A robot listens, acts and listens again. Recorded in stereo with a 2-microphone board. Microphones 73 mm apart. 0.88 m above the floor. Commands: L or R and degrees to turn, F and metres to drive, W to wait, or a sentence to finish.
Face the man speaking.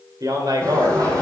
R65
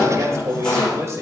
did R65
R40
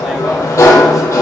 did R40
W
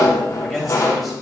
W
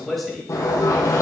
Facing the man speaking, over 4 m away.